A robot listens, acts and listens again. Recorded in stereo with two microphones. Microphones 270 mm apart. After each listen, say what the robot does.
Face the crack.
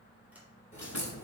Turn 25° left.
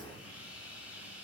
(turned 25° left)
Facing the crack.